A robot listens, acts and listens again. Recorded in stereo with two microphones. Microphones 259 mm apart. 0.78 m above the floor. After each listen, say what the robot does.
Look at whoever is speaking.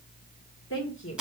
Turn 55° left.
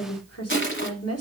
Turn 70° left.
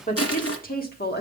Turn 40° left.
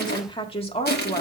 Turn 25° left.
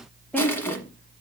Facing the woman speaking.